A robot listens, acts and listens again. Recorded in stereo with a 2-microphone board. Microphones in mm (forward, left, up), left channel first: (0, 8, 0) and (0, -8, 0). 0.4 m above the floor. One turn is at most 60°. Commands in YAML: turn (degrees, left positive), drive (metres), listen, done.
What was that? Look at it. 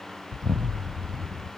turn: -60
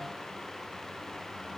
turn: -30
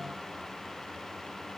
done: "I heard an explosion from this way, but can't make it out now."